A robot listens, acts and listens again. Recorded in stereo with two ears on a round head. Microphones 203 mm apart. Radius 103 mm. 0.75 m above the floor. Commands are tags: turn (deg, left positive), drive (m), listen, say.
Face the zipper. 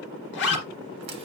<turn deg="50"/>
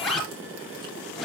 <say>Facing the zipper.</say>